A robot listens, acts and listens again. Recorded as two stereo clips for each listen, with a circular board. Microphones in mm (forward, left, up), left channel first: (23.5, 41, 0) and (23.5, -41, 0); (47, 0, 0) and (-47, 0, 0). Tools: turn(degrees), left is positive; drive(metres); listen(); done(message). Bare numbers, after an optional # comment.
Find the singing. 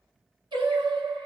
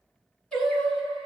# The singing: 75° right.
turn(-75)
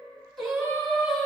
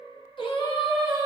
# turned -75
# The singing is now 10° left.
turn(10)
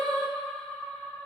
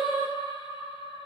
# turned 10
# The singing is now 10° left.
turn(10)
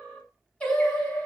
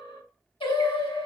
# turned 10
# The singing is now 25° left.
turn(25)
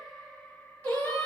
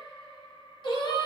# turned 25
# The singing is now 20° left.
turn(20)
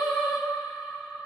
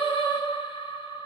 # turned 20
done("Facing the singing, 1 to 2 m away.")